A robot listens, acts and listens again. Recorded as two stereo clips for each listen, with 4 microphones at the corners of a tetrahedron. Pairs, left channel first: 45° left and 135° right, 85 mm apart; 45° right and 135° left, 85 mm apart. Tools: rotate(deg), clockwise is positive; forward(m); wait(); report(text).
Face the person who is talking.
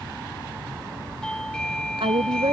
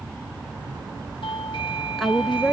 rotate(135)
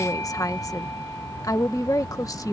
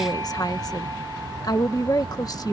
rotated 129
report("Facing the woman speaking.")